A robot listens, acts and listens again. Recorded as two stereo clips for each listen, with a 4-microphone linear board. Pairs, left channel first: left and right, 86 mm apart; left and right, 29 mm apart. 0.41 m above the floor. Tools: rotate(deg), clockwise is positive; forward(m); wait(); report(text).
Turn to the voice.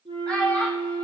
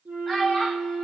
rotate(-15)
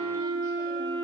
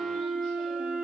wait()
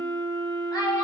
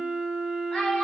rotate(-125)
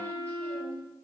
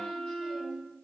wait()
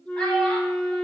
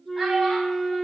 wait()
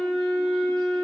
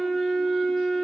report("I heard a child speaking from this way, but can't make it out now.")